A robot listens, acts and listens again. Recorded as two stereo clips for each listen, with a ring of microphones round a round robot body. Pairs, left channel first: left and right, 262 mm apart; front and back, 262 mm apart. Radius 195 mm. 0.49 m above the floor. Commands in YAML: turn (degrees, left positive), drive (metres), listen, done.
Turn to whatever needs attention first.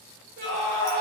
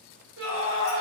turn: -145
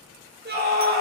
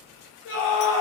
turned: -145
turn: -40
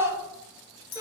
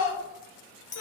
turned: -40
turn: -10
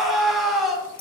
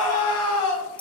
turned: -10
done: "Found it: a scream, straight ahead, 1 to 2 m away."